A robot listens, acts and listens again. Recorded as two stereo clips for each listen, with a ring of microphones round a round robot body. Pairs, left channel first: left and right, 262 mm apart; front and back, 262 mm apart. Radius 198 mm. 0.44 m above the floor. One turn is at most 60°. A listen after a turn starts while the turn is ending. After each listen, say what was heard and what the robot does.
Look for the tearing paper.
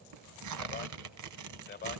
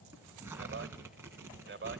The tearing paper: 95° right. Turn 60° right.
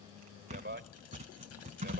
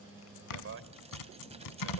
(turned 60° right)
The tearing paper is now 15° right. Turn 15° right.
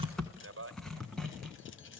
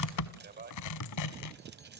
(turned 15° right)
Found it: tearing paper, straight ahead.